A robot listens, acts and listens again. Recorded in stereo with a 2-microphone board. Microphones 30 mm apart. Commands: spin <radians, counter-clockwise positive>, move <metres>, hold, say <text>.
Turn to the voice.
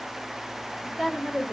spin -0.52
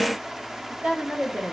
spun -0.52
spin -2.36
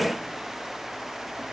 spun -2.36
spin 0.26
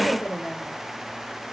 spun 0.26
spin 0.17
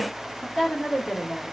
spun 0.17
say Facing the woman speaking.